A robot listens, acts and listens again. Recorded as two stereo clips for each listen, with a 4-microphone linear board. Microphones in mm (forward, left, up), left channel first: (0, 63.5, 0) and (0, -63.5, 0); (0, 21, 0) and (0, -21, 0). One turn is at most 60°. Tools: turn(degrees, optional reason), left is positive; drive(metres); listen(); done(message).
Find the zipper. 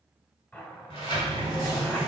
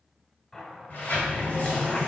turn(degrees=15, reason="The zipper: about 15° left or 165° left.")
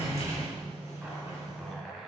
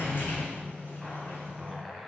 done("Facing the zipper.")